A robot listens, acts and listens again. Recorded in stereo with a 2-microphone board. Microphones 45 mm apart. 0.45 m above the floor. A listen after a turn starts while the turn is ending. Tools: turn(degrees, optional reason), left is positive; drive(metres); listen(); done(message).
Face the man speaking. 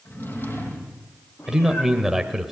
turn(degrees=-30)
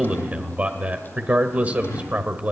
turn(degrees=-140, reason="So it is at 140° right.")
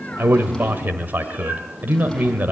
turn(degrees=-55, reason="The man speaking is now 55° right.")
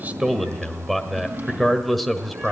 done("Facing the man speaking, 1 to 2 m away.")